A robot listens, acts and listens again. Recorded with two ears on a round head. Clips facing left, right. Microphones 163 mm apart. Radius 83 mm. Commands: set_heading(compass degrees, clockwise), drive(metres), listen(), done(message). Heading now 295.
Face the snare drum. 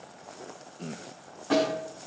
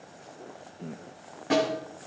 set_heading(315)
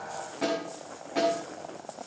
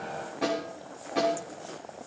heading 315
done("Found it: a snare drum, straight ahead, over 4 m away.")